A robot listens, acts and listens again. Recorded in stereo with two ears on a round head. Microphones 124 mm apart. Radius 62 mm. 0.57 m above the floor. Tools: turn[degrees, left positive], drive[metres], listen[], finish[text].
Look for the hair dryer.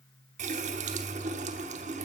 Action: listen[]
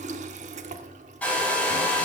Action: turn[30]
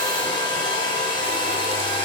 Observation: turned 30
Thought: So it is at 140° left.
Action: turn[140]
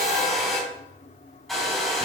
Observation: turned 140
Action: finish[Facing the hair dryer.]